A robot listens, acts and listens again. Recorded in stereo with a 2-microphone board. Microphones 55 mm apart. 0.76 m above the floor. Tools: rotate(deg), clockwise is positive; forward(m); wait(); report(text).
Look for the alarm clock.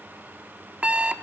rotate(20)
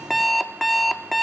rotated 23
report("Found it: an alarm clock, straight ahead, under 1 m away.")